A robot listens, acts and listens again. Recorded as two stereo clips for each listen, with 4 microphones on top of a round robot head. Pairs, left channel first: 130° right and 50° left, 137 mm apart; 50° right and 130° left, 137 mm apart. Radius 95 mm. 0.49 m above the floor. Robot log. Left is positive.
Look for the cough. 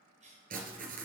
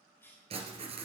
note: The cough: 20° left.
cmd yaw +20
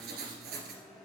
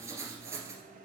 cmd idle
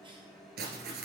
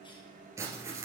cmd idle
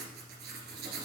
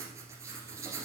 end: I heard a cough from this way, but can't make it out now.